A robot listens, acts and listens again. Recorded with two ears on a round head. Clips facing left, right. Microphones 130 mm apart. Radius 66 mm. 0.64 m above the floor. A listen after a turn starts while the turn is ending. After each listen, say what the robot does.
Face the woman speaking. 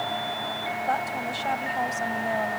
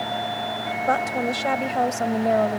Turn 70° right.
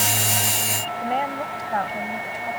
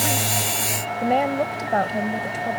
Turn 50° right.
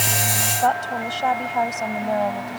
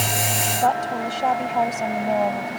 Turn 10° right.
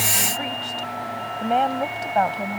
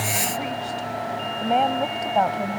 Facing the woman speaking.